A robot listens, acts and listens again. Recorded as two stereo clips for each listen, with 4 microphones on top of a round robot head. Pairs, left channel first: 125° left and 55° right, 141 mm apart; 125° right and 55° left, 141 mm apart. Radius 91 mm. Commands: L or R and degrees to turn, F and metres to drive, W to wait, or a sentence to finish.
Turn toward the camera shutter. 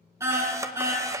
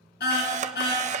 L15
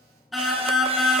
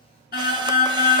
W
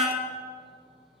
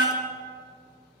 W
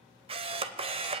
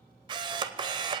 Facing the camera shutter.